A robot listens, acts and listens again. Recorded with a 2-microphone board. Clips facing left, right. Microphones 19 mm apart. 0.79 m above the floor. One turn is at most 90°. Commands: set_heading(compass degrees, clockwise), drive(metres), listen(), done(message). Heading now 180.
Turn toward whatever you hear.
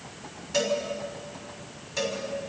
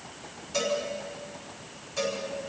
set_heading(160)
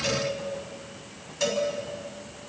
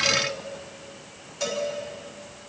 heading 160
done("Found it: a cowbell, straight ahead.")